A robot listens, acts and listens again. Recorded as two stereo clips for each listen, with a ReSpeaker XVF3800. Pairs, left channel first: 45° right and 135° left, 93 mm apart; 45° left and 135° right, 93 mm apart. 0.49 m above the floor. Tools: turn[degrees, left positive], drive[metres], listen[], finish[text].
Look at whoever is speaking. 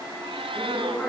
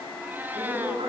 Thought: The woman speaking: 120° right.
Action: turn[-120]
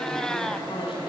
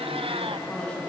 Thought: The woman speaking is now 35° right.
Action: turn[-35]
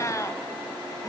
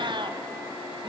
Action: listen[]
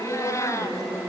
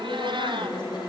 Thought: The woman speaking is now 15° left.
Action: turn[15]
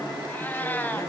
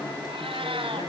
Thought: The woman speaking is now 10° left.
Action: turn[10]
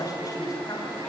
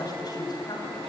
Action: finish[Facing the woman speaking, 2 to 4 m away.]